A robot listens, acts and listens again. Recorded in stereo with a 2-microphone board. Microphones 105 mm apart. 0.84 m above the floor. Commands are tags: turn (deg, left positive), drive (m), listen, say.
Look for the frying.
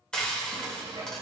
<turn deg="30"/>
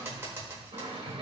<turn deg="-25"/>
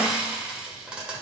<turn deg="-10"/>
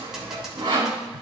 <say>Found it: frying, straight ahead, 2 to 4 m away.</say>